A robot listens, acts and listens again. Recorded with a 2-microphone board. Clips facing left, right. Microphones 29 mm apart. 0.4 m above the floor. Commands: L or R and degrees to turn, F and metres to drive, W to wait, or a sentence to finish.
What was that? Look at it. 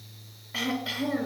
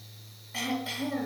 L15
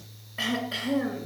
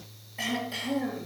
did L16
L150
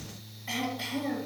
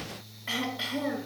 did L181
R35
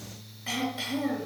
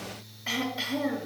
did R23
R10
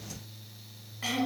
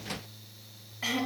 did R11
Found it: throat clearing, straight ahead, 2 to 4 m away.